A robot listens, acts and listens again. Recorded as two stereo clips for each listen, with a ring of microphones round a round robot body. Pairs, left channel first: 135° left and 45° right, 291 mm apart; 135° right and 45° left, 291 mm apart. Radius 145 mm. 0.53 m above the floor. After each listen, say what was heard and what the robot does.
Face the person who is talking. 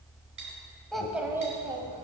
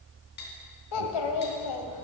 The child speaking: 120° right. Turn 120° right.
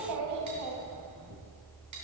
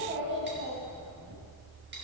Found it: a child speaking, straight ahead.